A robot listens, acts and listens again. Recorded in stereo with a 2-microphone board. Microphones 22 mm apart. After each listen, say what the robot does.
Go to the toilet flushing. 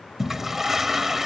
Turn 20° right.
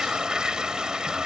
Turn 140° right.
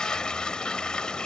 Turn 45° left.
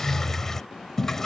Turn 25° left.
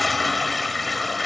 Drive 1.0 m forward.
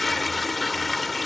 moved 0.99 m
Turn 10° left.
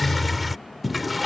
Drive 1.0 m forward.
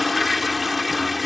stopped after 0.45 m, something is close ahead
Arrived at the toilet flushing, straight ahead.